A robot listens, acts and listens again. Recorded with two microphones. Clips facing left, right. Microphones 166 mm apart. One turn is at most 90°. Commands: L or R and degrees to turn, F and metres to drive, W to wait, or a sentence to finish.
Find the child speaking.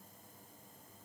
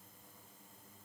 W
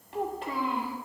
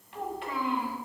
L40
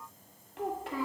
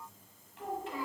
L90
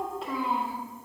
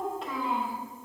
Facing the child speaking.